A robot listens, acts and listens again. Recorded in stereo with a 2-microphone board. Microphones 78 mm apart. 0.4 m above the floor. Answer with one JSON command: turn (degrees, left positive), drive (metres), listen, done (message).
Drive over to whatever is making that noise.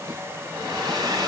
{"turn": -65}
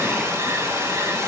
{"turn": -35}
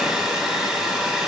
{"drive": 1.0}
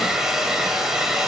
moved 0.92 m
{"drive": 1.0}
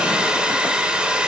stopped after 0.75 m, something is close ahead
{"turn": -15}
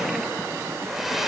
{"done": "Arrived at the hair dryer, straight ahead."}